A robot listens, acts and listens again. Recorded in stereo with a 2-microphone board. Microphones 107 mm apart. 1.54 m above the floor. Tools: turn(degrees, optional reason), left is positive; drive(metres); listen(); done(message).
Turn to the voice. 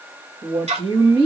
turn(degrees=-50, reason="The woman speaking: about 50° right or 130° right.")
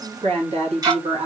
turn(degrees=-80, reason="So it is at 80° right.")
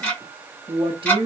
turn(degrees=-55, reason="The woman speaking is now 55° right.")
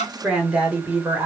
turn(degrees=-20, reason="The woman speaking is now 20° right.")
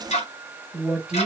turn(degrees=-10, reason="The woman speaking is now 10° right.")
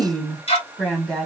done("Found it: a woman speaking, straight ahead.")